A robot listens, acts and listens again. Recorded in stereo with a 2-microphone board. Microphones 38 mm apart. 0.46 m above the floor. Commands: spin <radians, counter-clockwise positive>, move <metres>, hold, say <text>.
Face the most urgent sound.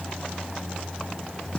hold
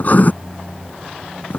hold
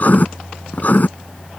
say I can't make out anything urgent to turn to.